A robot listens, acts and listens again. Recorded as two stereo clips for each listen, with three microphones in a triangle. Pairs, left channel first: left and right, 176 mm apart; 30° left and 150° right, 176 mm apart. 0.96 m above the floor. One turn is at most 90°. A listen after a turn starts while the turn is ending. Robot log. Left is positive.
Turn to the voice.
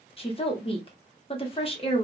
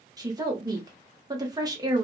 note: The woman speaking: 145° left.
cmd yaw +90
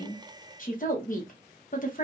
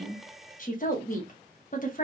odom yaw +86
note: The woman speaking is now 60° left.
cmd yaw +60
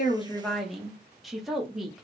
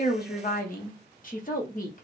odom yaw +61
end: Facing the woman speaking.